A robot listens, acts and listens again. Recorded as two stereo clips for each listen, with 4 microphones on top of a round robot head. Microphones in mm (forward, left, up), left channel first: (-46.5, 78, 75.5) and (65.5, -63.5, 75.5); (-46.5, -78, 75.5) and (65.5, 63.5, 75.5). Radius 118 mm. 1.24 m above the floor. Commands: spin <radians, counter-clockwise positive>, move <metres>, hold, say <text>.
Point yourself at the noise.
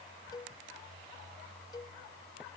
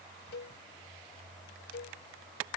spin -2.79
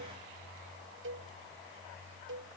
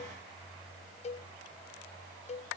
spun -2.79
spin -1.31
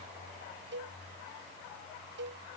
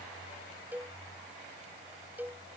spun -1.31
spin -0.52
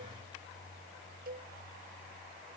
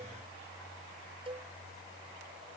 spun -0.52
spin -0.17
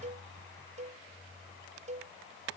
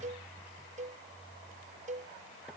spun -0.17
say Facing the cowbell.